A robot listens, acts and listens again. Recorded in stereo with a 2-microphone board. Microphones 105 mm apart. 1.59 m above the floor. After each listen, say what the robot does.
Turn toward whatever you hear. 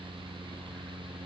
Keep listening.
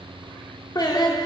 Turn 40° left.
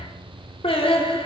Turn 90° left.
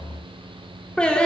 Turn 10° left.
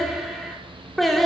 Found it: singing, straight ahead, 1 to 2 m away.